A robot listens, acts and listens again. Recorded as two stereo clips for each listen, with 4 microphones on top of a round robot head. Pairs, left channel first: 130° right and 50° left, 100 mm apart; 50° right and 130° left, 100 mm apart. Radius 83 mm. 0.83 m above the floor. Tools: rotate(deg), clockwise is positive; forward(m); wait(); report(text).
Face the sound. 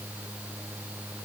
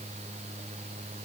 wait()
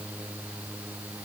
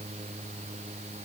wait()
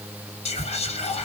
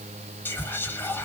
rotate(120)
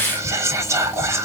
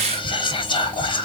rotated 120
rotate(10)
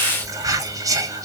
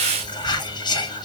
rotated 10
report("Facing the whispering, 1 to 2 m away.")